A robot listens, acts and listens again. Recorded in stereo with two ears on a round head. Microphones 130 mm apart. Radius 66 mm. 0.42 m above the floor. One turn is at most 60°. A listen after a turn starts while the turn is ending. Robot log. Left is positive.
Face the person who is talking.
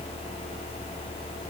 cmd idle
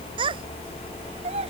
note: The child speaking: about 40° right or 140° right.
cmd yaw -40
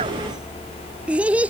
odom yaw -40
note: So it is at 10° right.
cmd yaw -10
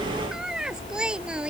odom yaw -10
end: Facing the child speaking.